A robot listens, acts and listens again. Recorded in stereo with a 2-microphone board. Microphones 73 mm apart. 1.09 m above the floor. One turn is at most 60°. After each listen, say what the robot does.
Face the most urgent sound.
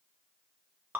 Keep listening.
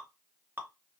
Keep listening.
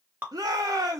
Turn 60° right.
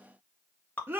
Turn 35° right.
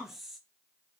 Keep listening.
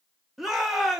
Facing the shout, under 1 m away.